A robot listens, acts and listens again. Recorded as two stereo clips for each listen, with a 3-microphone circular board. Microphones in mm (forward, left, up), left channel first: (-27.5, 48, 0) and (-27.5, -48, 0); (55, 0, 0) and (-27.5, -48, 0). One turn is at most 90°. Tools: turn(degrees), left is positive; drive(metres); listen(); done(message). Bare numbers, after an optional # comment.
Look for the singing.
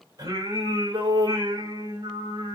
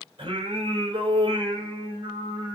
# The singing: 125° right.
turn(-90)
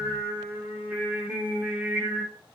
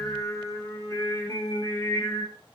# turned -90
# The singing is now 15° right.
turn(-15)
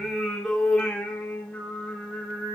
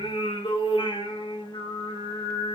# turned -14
# The singing is now 15° left.
turn(15)
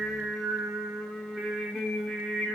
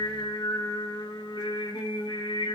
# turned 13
done("Facing the singing, 2 to 4 m away.")